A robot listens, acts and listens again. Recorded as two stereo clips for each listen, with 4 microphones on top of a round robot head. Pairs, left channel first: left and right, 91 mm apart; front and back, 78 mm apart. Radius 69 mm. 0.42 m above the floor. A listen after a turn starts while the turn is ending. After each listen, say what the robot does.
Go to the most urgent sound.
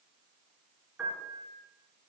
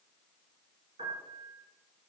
Keep listening.
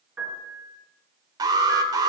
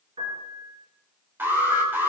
Turn 120° right.
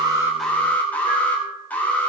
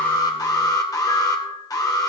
Turn 20° left.
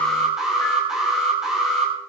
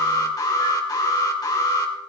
Drive 1.0 m forward.
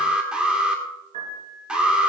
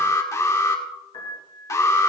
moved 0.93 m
Turn 15° right.
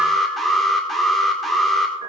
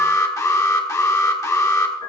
Drive 1.0 m forward.
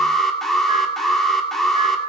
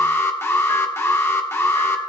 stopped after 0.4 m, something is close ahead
I am next to the alarm.